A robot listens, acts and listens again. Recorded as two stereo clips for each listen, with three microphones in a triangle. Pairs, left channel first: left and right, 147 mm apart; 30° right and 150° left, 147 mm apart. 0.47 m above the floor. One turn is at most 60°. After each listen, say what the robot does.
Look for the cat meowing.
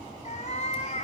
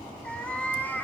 Turn 45° left.
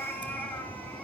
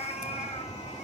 Turn 10° left.
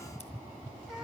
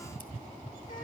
Facing the cat meowing.